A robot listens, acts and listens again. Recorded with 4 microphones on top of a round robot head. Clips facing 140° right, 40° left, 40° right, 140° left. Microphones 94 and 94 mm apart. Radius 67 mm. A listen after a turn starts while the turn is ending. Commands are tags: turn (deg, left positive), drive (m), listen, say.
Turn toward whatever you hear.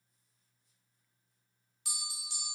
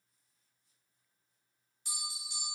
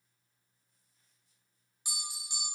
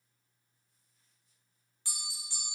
<turn deg="-115"/>
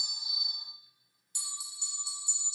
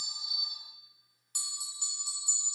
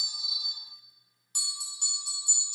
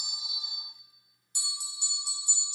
<say>Facing the bell, under 1 m away.</say>